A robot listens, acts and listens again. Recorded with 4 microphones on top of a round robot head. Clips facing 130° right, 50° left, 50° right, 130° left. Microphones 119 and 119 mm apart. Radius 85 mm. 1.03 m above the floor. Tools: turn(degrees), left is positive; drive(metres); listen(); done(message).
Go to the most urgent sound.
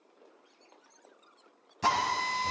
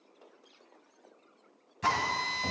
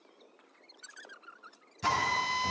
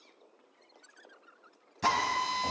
listen()
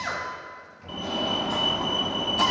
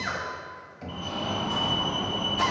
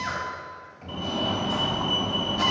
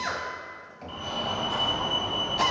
turn(degrees=-105)
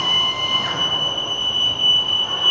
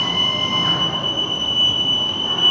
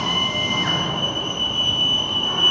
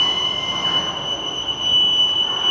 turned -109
drive(metres=1.0)
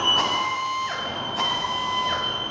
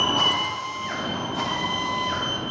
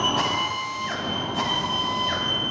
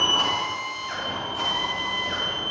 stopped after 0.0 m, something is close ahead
done("Blocked. The fire alarm is further on, straight ahead.")